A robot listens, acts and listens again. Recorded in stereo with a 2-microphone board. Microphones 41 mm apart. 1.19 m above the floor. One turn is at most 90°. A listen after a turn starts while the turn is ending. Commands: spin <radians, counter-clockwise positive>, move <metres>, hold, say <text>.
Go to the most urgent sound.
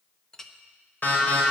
spin 0.87
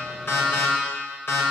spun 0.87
spin 1.48
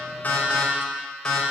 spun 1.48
spin 0.26
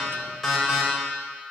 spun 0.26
move 1.0
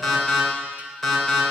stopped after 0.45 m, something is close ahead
say Blocked. The alarm is further on, straight ahead.